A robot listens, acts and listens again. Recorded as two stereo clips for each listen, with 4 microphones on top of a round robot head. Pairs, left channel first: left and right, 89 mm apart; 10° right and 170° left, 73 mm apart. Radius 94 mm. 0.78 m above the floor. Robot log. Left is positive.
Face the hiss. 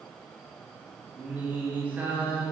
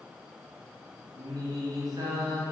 cmd idle
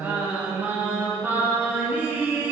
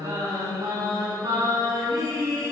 cmd idle
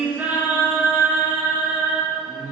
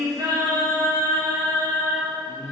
end: I can't make out a hiss to turn to.